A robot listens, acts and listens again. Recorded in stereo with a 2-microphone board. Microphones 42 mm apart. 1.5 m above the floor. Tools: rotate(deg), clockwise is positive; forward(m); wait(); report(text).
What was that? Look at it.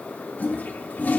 rotate(-40)
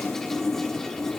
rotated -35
report("Found it: a toilet flushing, straight ahead.")